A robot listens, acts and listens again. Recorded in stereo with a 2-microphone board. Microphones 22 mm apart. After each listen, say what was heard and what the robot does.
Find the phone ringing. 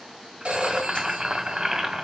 The phone ringing: about 70° right or 110° right. Turn 70° right.
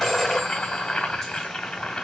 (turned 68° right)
Facing the phone ringing, 2 to 4 m away.